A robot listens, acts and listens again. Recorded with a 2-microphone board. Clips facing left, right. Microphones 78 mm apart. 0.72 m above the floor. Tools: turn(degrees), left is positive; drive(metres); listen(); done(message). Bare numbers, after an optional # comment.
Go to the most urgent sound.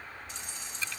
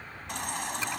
turn(-90)
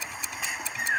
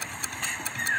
# So it is at 10° left.
turn(10)
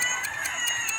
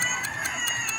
drive(1.0)
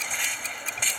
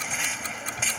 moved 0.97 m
drive(1.0)
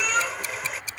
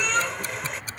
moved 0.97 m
drive(1.0)
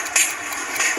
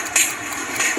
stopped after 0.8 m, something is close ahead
done("I am next to the baby crying.")